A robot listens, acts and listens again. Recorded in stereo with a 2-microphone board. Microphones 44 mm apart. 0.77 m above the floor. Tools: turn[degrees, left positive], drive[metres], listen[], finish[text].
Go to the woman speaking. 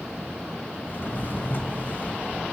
Action: listen[]
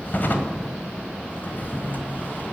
Action: listen[]
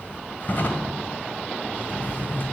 Action: finish[I can't make out a woman speaking to turn to.]